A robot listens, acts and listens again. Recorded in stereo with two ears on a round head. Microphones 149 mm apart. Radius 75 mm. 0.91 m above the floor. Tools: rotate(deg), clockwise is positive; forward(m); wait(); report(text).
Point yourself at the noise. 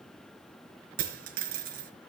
rotate(55)
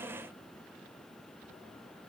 wait()
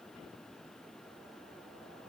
report("I heard a dropped coin, but can't make it out now. It was about straight ahead or 70° right.")